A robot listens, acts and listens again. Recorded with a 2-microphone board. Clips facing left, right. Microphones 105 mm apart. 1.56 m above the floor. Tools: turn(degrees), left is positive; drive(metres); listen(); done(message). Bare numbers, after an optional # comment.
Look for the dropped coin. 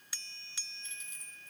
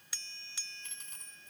# The dropped coin: about 55° right or 125° right.
turn(-55)
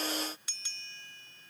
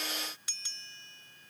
listen()
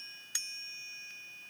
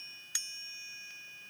done("I heard a dropped coin, but can't make it out now. It was about straight ahead or 70° right.")